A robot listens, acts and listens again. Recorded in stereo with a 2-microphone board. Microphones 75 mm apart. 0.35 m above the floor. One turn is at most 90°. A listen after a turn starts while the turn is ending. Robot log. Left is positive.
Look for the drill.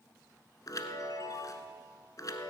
cmd idle
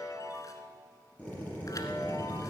note: The drill: about 20° left or 160° left.
cmd yaw +20
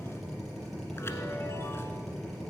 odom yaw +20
end: Facing the drill.